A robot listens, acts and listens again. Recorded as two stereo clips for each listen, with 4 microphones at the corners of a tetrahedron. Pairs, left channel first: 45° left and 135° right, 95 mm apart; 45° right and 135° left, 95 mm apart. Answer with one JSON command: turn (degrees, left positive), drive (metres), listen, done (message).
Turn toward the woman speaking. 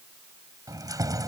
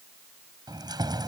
{"listen": true}
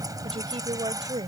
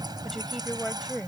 {"turn": -130}
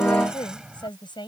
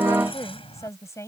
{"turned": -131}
{"turn": 15}
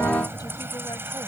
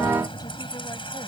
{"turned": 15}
{"listen": true}
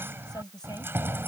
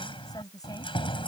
{"done": "Found it: a woman speaking, straight ahead."}